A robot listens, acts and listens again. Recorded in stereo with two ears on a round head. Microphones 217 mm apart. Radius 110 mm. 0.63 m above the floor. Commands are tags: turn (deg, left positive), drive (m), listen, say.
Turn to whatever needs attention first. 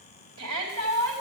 <turn deg="-60"/>
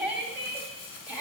<say>Facing the shout, 2 to 4 m away.</say>